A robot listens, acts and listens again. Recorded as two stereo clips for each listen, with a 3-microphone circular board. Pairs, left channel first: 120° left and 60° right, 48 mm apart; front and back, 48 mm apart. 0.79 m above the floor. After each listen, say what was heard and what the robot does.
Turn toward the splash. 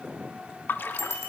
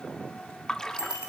The splash: 75° left. Turn 75° left.
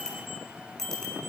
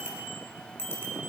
I heard a splash from this way, but can't make it out now.